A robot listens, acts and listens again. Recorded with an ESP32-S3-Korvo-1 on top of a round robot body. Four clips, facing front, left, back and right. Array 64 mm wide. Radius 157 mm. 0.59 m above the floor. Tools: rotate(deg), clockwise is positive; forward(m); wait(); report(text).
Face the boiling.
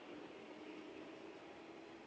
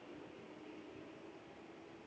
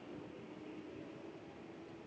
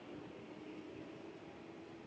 wait()
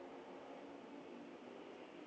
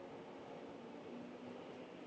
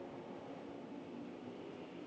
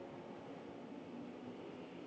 wait()
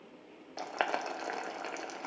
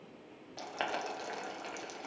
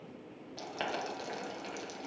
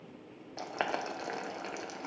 rotate(25)
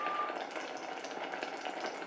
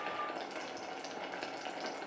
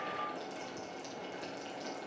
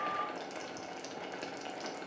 report("Found it: boiling, straight ahead, 1 to 2 m away.")